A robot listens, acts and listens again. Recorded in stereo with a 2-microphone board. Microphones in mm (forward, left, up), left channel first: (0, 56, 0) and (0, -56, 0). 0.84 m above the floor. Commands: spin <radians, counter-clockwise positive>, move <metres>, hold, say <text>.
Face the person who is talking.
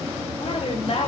spin 1.05
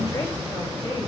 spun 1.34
hold
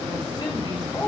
spin 0.70
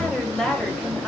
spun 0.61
spin 0.17
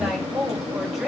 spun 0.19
say Found it: a woman speaking, straight ahead, over 4 m away.